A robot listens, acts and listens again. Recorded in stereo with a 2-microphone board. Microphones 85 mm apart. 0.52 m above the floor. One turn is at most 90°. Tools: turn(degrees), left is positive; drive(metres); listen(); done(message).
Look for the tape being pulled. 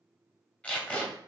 turn(degrees=15)
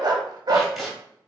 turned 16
done("Found it: tape being pulled, straight ahead, 1 to 2 m away.")